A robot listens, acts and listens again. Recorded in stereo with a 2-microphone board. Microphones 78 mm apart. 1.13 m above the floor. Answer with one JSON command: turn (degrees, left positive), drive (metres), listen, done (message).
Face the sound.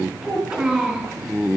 {"turn": -15}
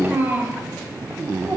{"turn": -35}
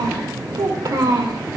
{"turn": -110}
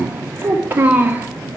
{"turn": -25}
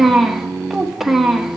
{"done": "Found it: a child speaking, straight ahead, 1 to 2 m away."}